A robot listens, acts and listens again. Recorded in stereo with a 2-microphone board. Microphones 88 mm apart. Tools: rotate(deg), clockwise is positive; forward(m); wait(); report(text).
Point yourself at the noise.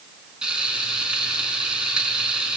rotate(30)
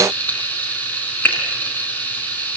rotate(-20)
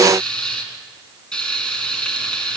rotate(-10)
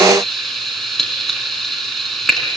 report("Facing the frying, 2 to 4 m away.")